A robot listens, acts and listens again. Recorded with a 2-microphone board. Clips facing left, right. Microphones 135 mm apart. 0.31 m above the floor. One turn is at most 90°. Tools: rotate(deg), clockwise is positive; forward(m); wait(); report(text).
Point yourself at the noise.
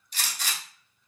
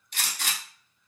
rotate(60)
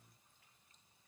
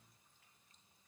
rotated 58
wait()
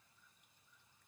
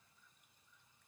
report("I heard a gunshot, but can't make it out now. It was about straight ahead or 60° right.")